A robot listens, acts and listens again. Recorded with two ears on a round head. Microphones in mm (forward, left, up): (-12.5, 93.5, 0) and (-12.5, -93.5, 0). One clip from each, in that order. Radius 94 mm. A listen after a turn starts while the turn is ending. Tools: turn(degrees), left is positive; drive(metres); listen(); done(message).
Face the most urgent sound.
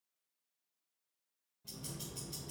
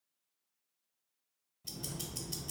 listen()
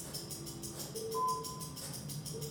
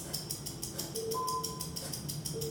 turn(degrees=-30)
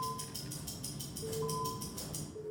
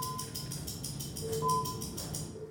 turn(degrees=-140)
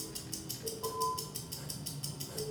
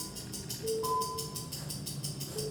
turn(degrees=10)
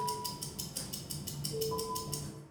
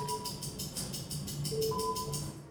listen()
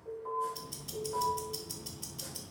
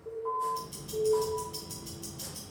done("Facing the alarm, 1 to 2 m away.")